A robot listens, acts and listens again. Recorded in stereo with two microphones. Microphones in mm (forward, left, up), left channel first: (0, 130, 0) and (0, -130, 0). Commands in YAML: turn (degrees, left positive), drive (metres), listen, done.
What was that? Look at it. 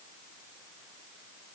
listen: true
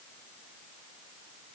listen: true
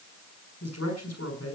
turn: 90
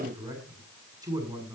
turn: -15
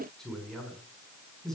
done: "Facing the man speaking."